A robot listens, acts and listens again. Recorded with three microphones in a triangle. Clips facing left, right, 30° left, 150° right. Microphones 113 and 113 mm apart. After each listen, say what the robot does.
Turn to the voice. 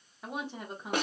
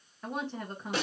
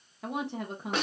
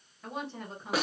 Turn 10° left.
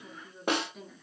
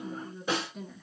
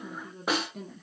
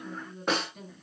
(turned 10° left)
Facing the woman speaking, 1 to 2 m away.